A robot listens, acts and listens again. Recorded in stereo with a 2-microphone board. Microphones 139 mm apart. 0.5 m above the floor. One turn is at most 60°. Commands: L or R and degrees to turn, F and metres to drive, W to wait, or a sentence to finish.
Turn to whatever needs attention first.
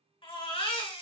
L40
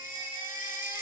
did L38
L60
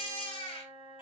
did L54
L45
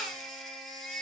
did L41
Found it: a baby crying, straight ahead, 2 to 4 m away.